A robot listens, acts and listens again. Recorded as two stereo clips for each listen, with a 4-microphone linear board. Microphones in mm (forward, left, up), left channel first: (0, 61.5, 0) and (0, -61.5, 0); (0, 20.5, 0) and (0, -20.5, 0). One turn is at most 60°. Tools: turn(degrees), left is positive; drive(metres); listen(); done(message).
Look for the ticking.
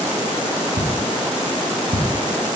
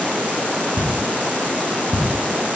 turn(degrees=-60)
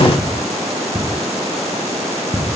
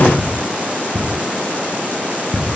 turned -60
done("Facing the ticking, 1 to 2 m away.")